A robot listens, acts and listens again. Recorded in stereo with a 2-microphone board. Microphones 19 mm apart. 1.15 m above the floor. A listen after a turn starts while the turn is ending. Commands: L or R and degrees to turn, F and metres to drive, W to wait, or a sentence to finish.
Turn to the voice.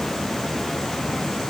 W
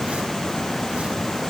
W
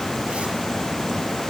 I can't make out anyone speaking to turn to.